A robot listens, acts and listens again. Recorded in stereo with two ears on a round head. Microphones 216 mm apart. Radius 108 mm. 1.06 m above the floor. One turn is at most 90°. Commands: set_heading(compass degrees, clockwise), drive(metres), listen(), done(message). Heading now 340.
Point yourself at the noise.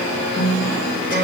set_heading(300)
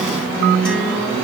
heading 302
done("Found it: a guitar, straight ahead.")